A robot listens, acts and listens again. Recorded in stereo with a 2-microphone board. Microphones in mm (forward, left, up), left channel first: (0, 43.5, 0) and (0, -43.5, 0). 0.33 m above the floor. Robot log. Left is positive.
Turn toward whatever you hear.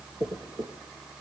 note: The dropped coin: about 50° right or 130° right.
cmd yaw -50
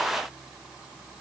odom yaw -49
cmd idle
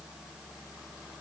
end: I heard a dropped coin, but can't make it out now. It was about 5° right or 80° right.